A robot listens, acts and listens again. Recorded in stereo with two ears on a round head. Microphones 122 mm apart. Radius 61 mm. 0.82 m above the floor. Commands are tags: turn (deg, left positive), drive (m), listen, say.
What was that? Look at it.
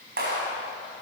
<turn deg="-90"/>
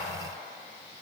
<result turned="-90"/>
<listen/>
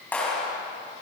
<turn deg="10"/>
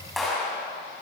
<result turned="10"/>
<say>Facing the clap.</say>